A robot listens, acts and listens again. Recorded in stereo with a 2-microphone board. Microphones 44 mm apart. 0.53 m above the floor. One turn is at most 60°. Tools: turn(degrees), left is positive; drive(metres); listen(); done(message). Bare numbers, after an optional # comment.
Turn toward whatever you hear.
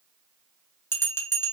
# The bell: about 65° left or 115° left.
turn(60)
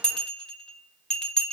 # So it is at 20° left.
turn(20)
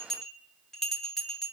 # The bell is now 10° left.
turn(10)
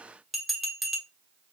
done("Facing the bell.")